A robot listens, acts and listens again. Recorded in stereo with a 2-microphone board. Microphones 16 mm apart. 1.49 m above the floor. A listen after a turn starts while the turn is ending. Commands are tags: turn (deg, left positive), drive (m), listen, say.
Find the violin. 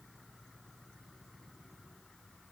<listen/>
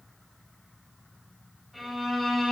<turn deg="30"/>
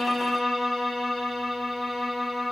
<turn deg="-35"/>
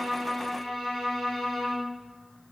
<say>Found it: a violin, straight ahead.</say>